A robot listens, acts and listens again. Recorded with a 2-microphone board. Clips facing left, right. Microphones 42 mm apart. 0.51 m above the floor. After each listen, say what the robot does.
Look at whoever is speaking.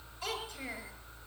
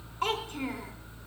Turn 55° right.
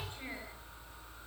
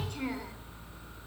Keep listening.
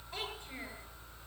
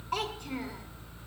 Keep listening.
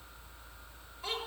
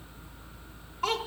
Turn 70° right.
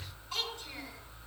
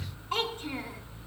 Turn 35° right.
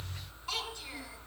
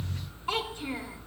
Turn 25° right.
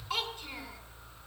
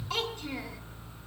Turn 10° left.
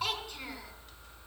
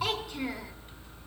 Found it: a child speaking, straight ahead.